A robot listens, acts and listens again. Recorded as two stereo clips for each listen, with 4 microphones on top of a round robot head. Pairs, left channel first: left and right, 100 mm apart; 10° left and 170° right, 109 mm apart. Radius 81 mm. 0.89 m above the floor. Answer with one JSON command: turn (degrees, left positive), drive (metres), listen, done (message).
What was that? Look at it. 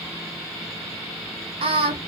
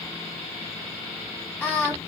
{"turn": -70}
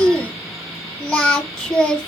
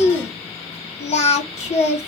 {"turn": 10}
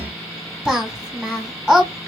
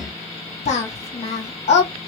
{"done": "Found it: singing, straight ahead."}